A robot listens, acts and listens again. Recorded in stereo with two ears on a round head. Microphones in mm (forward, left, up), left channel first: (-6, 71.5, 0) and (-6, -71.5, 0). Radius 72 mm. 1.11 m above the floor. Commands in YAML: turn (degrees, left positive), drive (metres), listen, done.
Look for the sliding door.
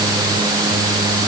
listen: true
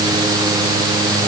listen: true
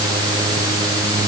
done: "I can't make out a sliding door."